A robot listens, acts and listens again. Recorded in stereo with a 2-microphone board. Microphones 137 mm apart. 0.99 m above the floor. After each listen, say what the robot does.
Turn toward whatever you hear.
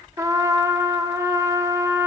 Turn 20° right.
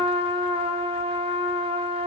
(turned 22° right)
Turn 135° right.
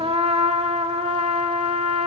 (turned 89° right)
Turn 45° right.
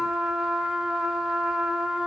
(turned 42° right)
Found it: a trumpet, straight ahead, under 1 m away.